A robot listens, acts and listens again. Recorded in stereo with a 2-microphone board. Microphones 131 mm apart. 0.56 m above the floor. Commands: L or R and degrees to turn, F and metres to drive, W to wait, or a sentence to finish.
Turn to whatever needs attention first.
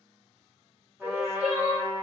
R60
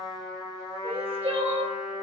R55
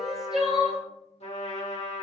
Facing the crying, 1 to 2 m away.